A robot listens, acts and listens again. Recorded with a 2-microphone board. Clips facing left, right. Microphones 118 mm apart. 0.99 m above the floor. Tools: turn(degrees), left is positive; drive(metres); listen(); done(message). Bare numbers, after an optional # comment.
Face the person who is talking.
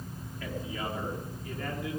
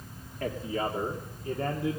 # The man speaking: about 35° right or 145° right.
turn(-35)
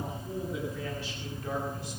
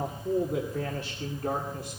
# So it is at 125° right.
turn(-125)
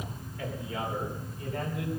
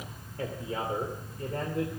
# The man speaking is now 45° right.
turn(-45)
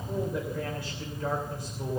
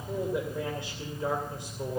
# The man speaking is now 25° right.
turn(-25)
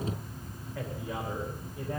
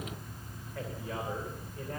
listen()
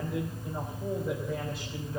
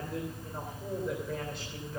done("Found it: a man speaking, straight ahead.")